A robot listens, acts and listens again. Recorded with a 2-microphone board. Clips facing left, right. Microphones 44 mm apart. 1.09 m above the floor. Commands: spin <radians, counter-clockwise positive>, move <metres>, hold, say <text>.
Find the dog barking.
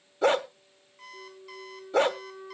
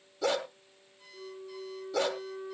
spin 0.70
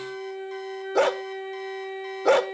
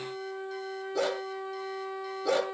spin 1.66
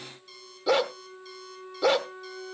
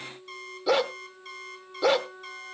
say Found it: a dog barking, straight ahead.